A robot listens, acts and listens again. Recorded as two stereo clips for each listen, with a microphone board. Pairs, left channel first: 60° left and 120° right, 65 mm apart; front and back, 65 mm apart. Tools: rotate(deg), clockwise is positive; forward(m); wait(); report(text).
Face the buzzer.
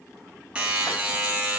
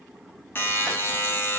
rotate(50)
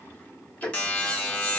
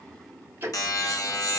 report("Found it: a buzzer, straight ahead.")